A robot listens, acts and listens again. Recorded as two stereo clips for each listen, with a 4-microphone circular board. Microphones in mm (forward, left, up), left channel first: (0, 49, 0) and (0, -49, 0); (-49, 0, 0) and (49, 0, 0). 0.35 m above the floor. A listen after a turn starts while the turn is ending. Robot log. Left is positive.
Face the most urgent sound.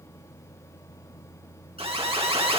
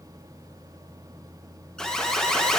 note: The alarm: 100° right.
cmd yaw -100
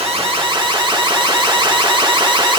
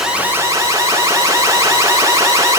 note: The alarm is now 60° right.
cmd yaw -60
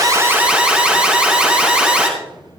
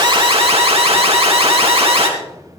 note: The alarm is now 15° right.
cmd yaw -15
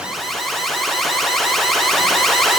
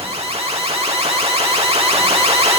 end: Facing the alarm.